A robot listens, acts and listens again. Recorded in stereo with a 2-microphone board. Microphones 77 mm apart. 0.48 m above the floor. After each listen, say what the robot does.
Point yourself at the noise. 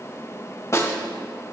Turn 40° left.
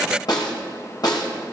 Turn 100° left.
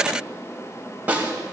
Turn 20° right.
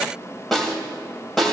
Found it: a snare drum, straight ahead, 2 to 4 m away.